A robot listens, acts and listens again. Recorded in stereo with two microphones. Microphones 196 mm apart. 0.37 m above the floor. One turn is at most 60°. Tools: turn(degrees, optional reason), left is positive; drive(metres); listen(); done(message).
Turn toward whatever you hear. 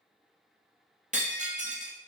turn(degrees=-40, reason="The breaking glass: about 40° right or 140° right.")
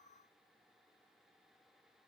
listen()
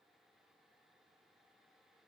done("I heard breaking glass, but can't make it out now. It was about straight ahead or 100° right.")